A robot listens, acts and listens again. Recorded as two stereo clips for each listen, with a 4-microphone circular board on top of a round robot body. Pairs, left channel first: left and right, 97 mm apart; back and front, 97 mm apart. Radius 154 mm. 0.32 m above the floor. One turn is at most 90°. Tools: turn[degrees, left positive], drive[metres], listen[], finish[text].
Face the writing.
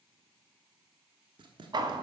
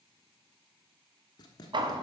Thought: The writing: 130° right.
Action: turn[-90]
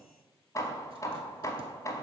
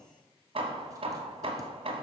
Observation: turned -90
Thought: Nothing new. It was at 40° right.
Action: turn[-40]
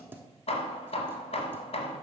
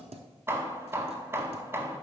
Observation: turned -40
Thought: The writing is now 20° right.
Action: turn[-20]
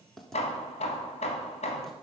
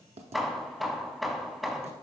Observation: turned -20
Action: finish[Found it: writing, straight ahead, under 1 m away.]